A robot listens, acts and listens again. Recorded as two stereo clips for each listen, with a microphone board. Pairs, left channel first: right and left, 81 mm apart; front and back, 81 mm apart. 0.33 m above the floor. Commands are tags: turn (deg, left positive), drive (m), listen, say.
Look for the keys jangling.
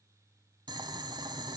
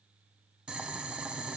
<listen/>
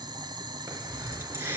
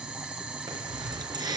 <turn deg="150"/>
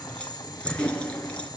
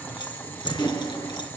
<turn deg="-15"/>
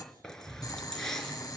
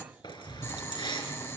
<say>Facing the keys jangling, over 4 m away.</say>